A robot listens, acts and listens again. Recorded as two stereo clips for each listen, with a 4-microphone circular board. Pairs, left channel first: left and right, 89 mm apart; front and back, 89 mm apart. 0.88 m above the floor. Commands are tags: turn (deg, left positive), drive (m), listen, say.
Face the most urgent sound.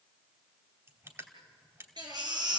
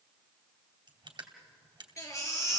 <turn deg="-55"/>
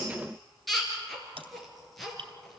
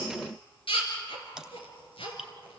<say>Facing the baby crying, over 4 m away.</say>